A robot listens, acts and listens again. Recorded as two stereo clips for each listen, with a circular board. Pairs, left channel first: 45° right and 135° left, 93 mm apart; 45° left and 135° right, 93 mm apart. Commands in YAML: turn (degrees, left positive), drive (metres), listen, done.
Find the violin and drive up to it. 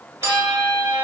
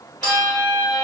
turn: -25
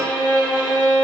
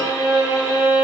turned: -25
drive: 1.0
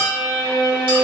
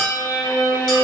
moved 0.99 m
drive: 1.0
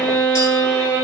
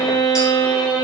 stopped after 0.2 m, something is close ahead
turn: 10
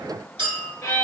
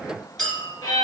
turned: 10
done: "I am next to the violin."